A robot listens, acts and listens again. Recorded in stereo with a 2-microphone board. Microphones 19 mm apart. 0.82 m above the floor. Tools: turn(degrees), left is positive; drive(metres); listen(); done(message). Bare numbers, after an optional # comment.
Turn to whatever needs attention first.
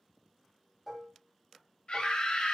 # The scream: about 60° left or 120° left.
turn(60)
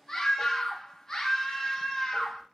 # So it is at 30° left.
turn(30)
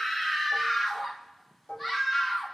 done("Found it: a scream, straight ahead, 1 to 2 m away.")